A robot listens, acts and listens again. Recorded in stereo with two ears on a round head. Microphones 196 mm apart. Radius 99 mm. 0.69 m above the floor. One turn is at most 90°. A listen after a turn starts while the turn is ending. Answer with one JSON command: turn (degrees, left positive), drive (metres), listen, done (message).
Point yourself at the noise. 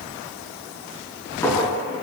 {"turn": 30}
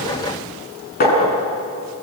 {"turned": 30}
{"turn": 90}
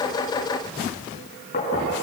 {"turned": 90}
{"turn": 30}
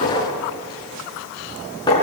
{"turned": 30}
{"turn": 20}
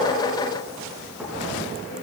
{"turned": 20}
{"listen": true}
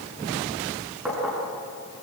{"done": "Found it: a clink, straight ahead, over 4 m away."}